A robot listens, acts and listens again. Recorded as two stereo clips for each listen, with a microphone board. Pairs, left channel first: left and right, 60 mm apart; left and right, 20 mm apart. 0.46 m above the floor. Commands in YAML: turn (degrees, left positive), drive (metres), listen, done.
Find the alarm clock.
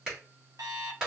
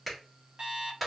turn: -70
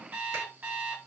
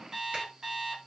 turn: -30
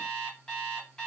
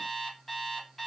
turn: 10
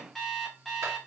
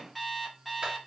done: "Found it: an alarm clock, straight ahead."